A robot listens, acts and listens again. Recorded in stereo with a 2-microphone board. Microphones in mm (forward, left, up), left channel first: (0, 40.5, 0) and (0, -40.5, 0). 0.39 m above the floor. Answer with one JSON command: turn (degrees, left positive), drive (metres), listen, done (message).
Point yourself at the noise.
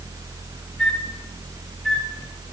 {"turn": 30}
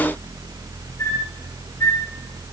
{"turn": 145}
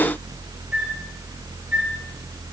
{"turn": -15}
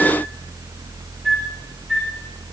{"done": "Found it: a flute, straight ahead."}